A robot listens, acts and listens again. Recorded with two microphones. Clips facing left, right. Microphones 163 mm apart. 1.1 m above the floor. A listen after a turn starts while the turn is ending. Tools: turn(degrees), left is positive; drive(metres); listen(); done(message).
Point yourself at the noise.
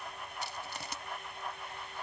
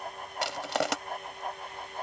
turn(degrees=-90)
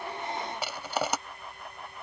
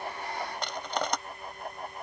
done("Facing the crushing.")